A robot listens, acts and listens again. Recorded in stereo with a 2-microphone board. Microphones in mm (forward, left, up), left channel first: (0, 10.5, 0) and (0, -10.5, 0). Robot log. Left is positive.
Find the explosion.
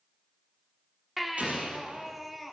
note: The explosion: about 75° right or 105° right.
cmd yaw -75
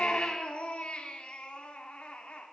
cmd idle
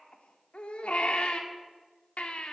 end: I heard an explosion, but can't make it out now. It was about straight ahead or 30° right.